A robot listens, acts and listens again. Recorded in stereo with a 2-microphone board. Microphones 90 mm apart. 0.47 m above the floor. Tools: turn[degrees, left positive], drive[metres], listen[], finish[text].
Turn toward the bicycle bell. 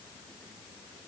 Action: listen[]
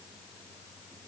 Action: listen[]
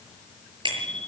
Thought: The bicycle bell: about 65° right or 115° right.
Action: turn[-65]
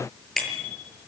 Action: finish[Found it: a bicycle bell, straight ahead, over 4 m away.]